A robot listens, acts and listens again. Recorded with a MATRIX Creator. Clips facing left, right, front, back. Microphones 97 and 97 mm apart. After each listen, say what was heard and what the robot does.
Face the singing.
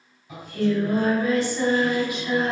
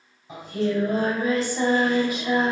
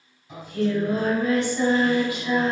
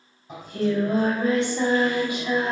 The singing: 115° right. Turn 115° right.
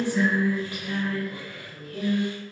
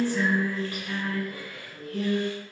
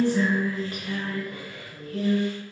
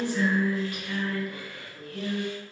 The singing is now 45° left. Turn 45° left.
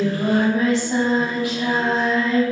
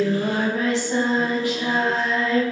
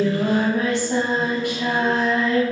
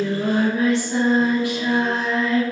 The singing is now 20° left. Turn 20° left.
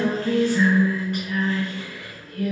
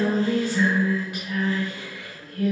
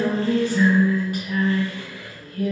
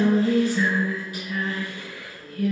Facing the singing, 2 to 4 m away.